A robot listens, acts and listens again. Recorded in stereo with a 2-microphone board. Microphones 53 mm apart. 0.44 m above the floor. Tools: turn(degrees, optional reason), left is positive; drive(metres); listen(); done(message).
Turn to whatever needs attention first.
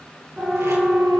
turn(degrees=-20, reason="The siren: about 20° right or 160° right.")
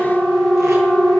turn(degrees=-140, reason="So it is at 140° right.")
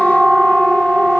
done("Facing the siren.")